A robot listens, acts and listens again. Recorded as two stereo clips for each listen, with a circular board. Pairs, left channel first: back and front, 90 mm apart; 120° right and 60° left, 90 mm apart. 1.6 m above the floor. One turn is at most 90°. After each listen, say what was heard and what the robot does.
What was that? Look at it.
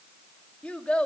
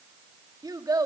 The child speaking: 105° left. Turn 90° left.
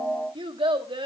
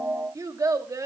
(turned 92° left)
The child speaking is now 10° left. Turn 10° left.
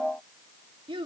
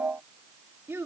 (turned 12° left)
Facing the child speaking.